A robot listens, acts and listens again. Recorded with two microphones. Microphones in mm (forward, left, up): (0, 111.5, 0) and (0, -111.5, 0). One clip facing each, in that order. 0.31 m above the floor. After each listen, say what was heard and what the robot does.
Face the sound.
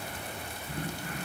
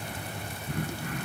Turn 90° right.
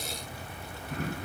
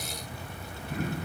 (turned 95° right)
Facing the throat clearing, over 4 m away.